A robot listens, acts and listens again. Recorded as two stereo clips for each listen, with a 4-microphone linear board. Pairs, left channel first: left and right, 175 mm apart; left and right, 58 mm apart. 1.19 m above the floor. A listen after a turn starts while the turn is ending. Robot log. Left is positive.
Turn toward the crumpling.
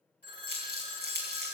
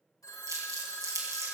note: The crumpling: about 75° right or 105° right.
cmd yaw -75
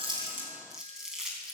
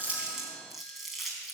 end: Facing the crumpling, 2 to 4 m away.